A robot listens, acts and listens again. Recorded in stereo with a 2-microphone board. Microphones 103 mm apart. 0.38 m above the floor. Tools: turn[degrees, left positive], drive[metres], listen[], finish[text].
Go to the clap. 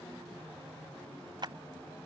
Thought: The clap: about 50° right or 130° right.
Action: turn[-50]
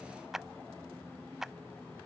Action: drive[1.0]
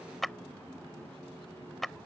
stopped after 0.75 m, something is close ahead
Action: finish[I am next to the clap.]